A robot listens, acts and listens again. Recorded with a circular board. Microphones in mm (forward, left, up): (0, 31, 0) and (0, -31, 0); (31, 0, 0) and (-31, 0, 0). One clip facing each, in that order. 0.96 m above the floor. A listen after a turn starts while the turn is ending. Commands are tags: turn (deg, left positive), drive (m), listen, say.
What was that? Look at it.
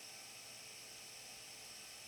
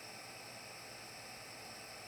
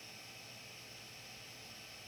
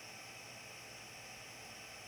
<listen/>
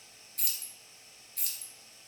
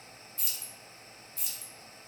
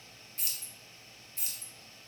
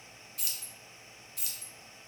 <turn deg="60"/>
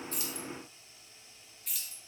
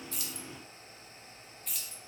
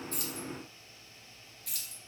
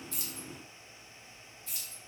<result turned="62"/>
<say>Found it: keys jangling, straight ahead.</say>